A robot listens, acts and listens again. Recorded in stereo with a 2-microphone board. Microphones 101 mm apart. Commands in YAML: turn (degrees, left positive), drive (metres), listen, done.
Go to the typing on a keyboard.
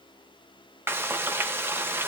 listen: true
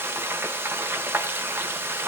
listen: true
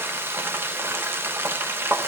done: "I can't make out typing on a keyboard, only frying."